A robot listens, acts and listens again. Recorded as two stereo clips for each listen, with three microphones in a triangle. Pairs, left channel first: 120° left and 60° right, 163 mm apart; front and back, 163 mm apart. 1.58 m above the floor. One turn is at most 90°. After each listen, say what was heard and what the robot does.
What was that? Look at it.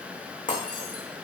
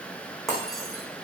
The breaking glass: 90° left. Turn 90° left.
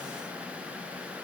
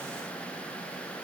Facing where the breaking glass came from. I can't hear it now.